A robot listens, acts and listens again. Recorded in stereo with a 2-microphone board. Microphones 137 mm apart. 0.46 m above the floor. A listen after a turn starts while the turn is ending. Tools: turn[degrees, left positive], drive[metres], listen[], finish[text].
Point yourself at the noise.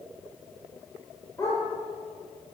Thought: The dog barking: about 25° left or 155° left.
Action: turn[25]
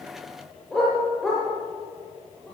Action: finish[Facing the dog barking, over 4 m away.]